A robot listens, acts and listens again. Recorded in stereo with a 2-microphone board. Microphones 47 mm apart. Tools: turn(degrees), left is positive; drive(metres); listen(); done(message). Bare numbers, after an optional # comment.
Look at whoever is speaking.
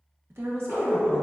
# The woman speaking: about 60° right or 120° right.
turn(-60)
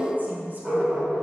listen()
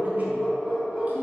listen()
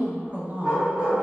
# So it is at 45° right.
turn(-45)
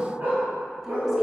listen()
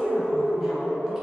listen()
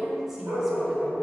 # The woman speaking is now 10° right.
turn(-10)
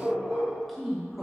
done("Facing the woman speaking, under 1 m away.")